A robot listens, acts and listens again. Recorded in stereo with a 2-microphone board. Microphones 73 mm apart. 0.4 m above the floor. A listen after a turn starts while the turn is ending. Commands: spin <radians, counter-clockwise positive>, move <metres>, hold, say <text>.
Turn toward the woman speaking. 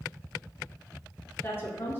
spin 0.52
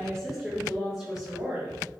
spin -0.17
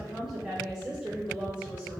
spin -0.26
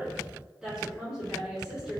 spin -0.17
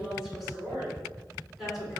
say Facing the woman speaking, 2 to 4 m away.